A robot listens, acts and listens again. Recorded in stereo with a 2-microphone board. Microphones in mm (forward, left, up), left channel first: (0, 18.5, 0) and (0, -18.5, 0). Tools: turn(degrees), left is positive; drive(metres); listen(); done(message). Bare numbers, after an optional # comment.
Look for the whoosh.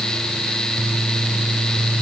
listen()
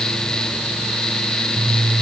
listen()
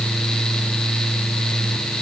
done("I can't make out a whoosh.")